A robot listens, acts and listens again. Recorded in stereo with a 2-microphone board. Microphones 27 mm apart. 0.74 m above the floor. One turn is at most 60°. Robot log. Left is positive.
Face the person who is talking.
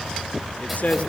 note: The man speaking: about 60° left or 120° left.
cmd yaw +60
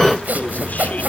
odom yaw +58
cmd idle
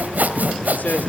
note: So it is at 70° left.
cmd yaw +60
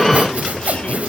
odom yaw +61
note: Nothing new. It was at 10° left.
cmd yaw +10
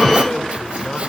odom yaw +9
note: The man speaking is now 35° left.
cmd yaw +35
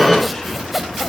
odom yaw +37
cmd idle
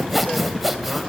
cmd idle
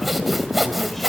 end: I heard a man speaking from this way, but can't make it out now.